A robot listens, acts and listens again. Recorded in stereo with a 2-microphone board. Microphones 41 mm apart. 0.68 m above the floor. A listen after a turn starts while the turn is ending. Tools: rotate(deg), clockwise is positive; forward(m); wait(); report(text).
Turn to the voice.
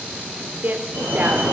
rotate(50)
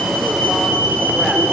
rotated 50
wait()
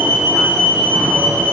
wait()
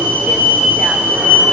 report("I heard a woman speaking, but can't make it out now. It was about straight ahead or 80° right.")